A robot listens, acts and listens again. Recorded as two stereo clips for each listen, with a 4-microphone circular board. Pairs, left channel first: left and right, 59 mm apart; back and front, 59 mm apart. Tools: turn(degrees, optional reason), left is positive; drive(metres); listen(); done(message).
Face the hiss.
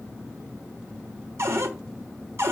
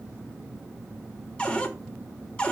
listen()
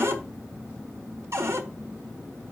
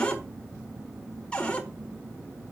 listen()
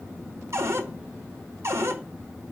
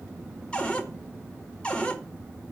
done("I can't make out a hiss, only a cupboard door.")